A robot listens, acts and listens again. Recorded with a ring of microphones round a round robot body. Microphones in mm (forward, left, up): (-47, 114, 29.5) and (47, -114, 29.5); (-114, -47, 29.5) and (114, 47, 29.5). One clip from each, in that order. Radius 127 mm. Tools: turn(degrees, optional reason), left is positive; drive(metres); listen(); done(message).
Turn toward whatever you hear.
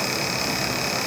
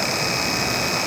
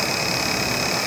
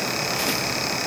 listen()
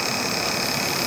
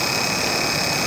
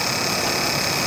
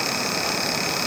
listen()
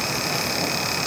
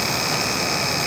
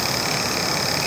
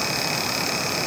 done("I can't make out anything.")